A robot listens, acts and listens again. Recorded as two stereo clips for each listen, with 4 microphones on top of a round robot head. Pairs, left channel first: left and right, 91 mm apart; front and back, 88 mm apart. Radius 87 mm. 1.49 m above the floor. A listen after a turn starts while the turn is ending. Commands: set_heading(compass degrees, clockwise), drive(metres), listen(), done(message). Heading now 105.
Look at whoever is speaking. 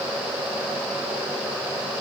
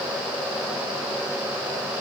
listen()
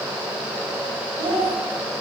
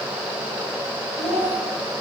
set_heading(170)
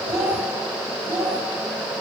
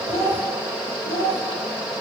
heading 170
set_heading(195)
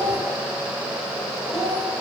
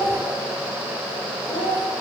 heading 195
done("Facing the child speaking.")